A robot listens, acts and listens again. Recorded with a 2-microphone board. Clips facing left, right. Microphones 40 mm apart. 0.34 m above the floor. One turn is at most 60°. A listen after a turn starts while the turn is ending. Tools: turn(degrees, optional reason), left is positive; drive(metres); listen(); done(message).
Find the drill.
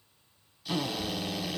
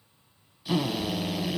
turn(degrees=-30)
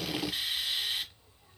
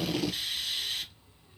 turn(degrees=15, reason="So it is at 15° left.")
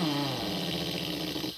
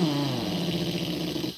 done("Found it: a drill, straight ahead.")